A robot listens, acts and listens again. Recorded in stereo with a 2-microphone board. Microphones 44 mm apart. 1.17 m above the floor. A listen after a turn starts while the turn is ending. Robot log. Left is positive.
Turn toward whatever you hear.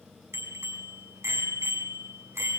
cmd yaw -90
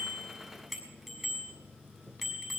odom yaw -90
end: Found it: a bicycle bell, straight ahead.